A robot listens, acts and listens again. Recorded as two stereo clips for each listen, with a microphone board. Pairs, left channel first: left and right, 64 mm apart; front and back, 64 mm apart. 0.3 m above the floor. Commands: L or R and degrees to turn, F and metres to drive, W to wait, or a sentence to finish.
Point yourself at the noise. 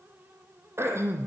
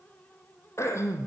R45
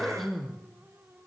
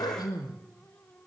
Found it: throat clearing, straight ahead, 2 to 4 m away.